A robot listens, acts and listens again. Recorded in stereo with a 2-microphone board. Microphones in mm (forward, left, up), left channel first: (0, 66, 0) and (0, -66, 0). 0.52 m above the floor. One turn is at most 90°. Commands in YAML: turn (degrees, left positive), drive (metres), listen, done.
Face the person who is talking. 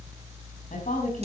turn: 90
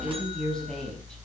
done: "Found it: a woman speaking, straight ahead."